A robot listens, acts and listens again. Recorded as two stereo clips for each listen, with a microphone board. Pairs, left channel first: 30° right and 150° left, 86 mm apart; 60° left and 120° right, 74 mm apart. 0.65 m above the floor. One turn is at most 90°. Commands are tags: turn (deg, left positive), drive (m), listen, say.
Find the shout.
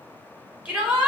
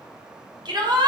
<turn deg="-90"/>
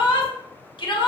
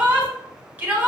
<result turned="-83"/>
<turn deg="-55"/>
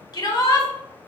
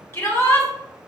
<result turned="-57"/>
<say>Facing the shout.</say>